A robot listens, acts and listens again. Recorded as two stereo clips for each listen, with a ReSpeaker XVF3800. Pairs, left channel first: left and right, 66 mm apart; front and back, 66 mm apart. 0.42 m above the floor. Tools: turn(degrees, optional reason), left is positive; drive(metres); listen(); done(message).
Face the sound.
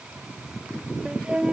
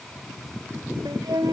turn(degrees=-165, reason="The flute: 165° right.")
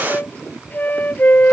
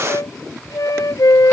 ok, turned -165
turn(degrees=25, reason="The flute is now 25° left.")
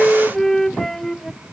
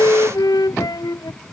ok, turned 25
done("Found it: a flute, straight ahead.")